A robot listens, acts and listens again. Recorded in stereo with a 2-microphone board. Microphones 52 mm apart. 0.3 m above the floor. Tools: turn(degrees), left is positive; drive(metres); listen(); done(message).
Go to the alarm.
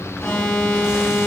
turn(degrees=20)
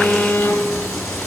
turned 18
turn(degrees=145)
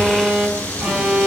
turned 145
drive(metres=1.0)
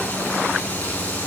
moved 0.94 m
listen()
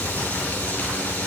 listen()
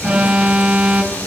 turn(degrees=-10)
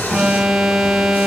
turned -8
drive(metres=1.0)
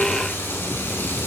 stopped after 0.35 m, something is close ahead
listen()
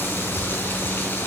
listen()
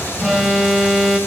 done("I am next to the alarm.")